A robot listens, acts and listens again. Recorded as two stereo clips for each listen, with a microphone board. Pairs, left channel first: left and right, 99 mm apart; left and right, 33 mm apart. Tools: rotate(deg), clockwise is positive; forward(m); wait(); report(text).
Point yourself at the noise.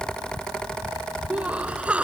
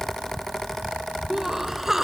rotate(30)
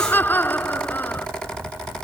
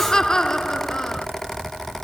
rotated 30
rotate(-20)
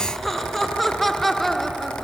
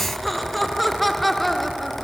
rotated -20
report("Found it: laughter, straight ahead.")